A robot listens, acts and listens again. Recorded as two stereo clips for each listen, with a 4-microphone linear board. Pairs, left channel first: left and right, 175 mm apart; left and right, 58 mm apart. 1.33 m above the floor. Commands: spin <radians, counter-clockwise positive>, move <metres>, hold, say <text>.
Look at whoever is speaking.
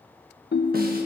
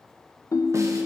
hold
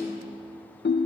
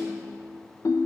hold
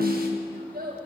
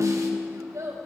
spin -1.05
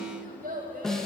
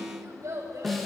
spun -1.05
spin -1.05
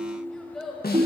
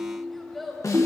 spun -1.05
say Facing the child speaking.